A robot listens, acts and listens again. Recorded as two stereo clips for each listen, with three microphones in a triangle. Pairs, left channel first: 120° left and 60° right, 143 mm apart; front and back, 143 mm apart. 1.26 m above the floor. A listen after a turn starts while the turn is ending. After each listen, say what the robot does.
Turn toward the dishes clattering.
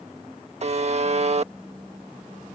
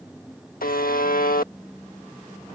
Keep listening.
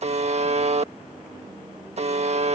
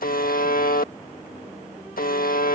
Keep listening.
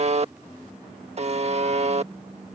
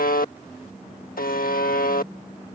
I can't make out dishes clattering to turn to.